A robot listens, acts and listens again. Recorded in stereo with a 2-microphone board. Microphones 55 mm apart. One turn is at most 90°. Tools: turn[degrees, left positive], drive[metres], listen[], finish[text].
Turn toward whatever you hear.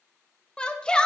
Thought: The shout: about 15° left or 165° left.
Action: turn[15]
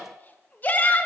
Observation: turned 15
Thought: So it is at 150° left.
Action: turn[90]
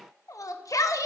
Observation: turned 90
Thought: The shout is now 90° left.
Action: turn[90]
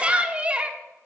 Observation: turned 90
Thought: The shout is now 20° right.
Action: turn[-20]
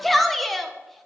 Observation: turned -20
Action: finish[Facing the shout.]